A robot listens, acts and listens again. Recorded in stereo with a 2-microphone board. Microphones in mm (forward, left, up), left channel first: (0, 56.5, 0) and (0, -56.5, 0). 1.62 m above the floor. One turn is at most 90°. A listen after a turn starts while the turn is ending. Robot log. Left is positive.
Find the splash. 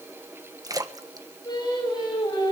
note: The splash: about 35° right or 145° right.
cmd yaw -35
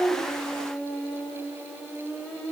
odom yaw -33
cmd idle
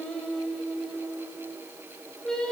end: I heard a splash, but can't make it out now. It was about straight ahead or 115° right.